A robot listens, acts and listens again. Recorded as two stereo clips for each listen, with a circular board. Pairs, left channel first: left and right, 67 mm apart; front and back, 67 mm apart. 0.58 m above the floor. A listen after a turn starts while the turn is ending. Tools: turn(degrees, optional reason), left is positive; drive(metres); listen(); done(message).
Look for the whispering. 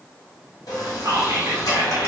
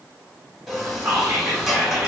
turn(degrees=-120, reason="The whispering: 120° right.")
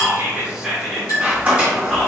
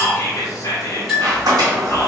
turn(degrees=-10, reason="The whispering is now 10° right.")
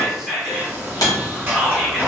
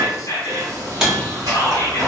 done("Found it: whispering, straight ahead, 1 to 2 m away.")